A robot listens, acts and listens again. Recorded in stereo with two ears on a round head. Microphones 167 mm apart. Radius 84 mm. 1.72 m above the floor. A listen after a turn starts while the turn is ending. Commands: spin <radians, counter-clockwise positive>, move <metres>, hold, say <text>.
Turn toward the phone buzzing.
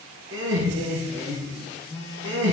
spin 0.44
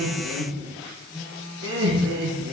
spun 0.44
say Found it: a phone buzzing, straight ahead.